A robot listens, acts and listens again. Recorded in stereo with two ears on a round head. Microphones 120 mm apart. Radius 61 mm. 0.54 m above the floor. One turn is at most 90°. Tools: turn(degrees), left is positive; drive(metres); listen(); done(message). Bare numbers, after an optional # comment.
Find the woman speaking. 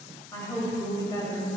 # The woman speaking: about 25° left or 155° left.
turn(25)
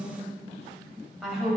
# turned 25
done("Found it: a woman speaking, straight ahead, 2 to 4 m away.")